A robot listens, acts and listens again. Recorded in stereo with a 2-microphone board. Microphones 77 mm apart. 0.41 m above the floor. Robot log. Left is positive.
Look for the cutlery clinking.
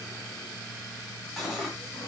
cmd yaw +30
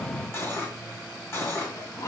note: So it is at 145° left.
cmd yaw +145
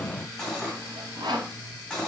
note: The cutlery clinking is now 10° left.
cmd yaw +10
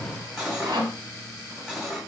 end: Facing the cutlery clinking.